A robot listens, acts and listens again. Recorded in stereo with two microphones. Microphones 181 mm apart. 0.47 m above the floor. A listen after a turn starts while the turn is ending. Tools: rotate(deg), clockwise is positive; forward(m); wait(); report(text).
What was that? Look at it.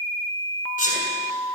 rotate(-55)
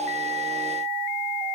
wait()
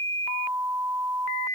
report("I heard a sneeze, but can't make it out now. It was about straight ahead or 70° left.")